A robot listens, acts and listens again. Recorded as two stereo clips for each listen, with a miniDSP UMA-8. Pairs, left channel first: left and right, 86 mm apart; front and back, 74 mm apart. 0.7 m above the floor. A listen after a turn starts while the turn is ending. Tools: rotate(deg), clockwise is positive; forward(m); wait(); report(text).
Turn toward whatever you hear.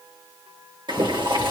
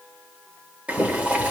rotate(110)
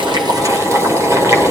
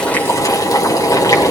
rotate(35)
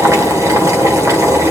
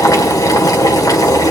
rotate(40)
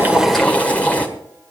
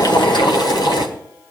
rotate(-15)
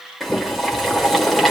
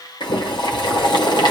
report("Facing the boiling.")